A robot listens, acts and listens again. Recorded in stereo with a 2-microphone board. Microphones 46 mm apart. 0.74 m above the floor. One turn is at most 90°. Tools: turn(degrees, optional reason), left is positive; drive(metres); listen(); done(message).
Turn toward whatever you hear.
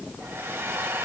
turn(degrees=-60, reason="The hair dryer: about 60° right or 120° right.")
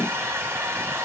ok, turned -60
turn(degrees=-55, reason="So it is at 55° right.")
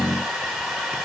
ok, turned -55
done("Found it: a hair dryer, straight ahead.")